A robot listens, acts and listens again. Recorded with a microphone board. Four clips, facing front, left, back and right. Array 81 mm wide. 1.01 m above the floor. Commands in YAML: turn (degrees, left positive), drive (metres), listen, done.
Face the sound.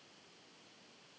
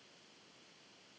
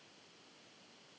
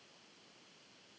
listen: true
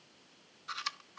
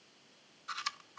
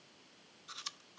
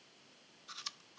turn: 50
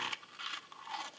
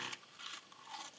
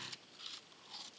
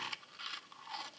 turn: -20
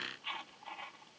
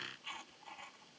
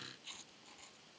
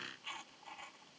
done: "Found it: chewing, straight ahead."